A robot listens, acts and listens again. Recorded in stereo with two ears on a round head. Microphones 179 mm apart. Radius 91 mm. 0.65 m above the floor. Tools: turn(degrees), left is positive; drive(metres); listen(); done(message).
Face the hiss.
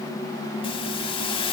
turn(degrees=25)
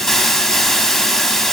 done("Found it: a hiss, straight ahead.")